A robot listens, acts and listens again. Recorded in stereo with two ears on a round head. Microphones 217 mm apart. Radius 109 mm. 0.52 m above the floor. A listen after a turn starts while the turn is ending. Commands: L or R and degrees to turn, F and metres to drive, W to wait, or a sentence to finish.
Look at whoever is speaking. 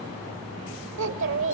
R60
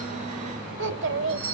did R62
R55
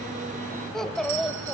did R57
Found it: a child speaking, straight ahead.